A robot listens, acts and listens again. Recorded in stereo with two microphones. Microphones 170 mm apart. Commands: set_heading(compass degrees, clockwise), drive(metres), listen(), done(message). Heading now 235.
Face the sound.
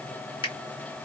set_heading(205)
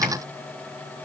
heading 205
listen()
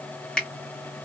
done("Found it: a finger snap, straight ahead.")